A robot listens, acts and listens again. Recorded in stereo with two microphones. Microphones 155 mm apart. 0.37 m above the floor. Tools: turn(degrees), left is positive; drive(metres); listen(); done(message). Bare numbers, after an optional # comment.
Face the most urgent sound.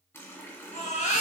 # The baby crying: about 50° left or 130° left.
turn(50)
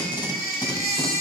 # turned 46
# So it is at 80° left.
turn(80)
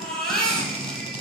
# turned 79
done("Facing the baby crying.")